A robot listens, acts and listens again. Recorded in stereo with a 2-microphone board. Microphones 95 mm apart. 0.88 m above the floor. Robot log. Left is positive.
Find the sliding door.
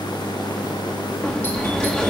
cmd yaw +30
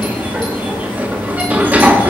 note: So it is at 20° right.
cmd yaw -20
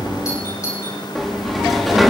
end: Found it: a sliding door, straight ahead.